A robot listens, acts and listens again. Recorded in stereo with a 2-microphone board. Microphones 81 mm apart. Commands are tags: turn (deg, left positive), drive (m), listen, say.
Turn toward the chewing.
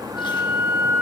<listen/>
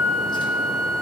<listen/>
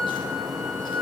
<say>I can't make out chewing to turn to.</say>